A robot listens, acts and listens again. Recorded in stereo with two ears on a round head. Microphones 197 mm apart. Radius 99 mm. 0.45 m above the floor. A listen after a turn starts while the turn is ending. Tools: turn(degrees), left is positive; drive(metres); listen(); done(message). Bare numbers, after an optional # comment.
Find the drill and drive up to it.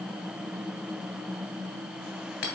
listen()
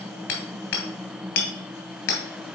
listen()
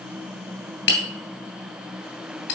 done("I can't make out a drill to turn to.")